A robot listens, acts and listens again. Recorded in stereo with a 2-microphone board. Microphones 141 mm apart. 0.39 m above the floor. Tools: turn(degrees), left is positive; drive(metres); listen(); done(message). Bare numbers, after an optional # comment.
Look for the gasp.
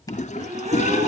# The gasp: about 55° right or 125° right.
turn(-55)
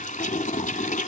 listen()
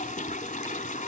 done("I heard a gasp, but can't make it out now. It was about straight ahead or 70° right.")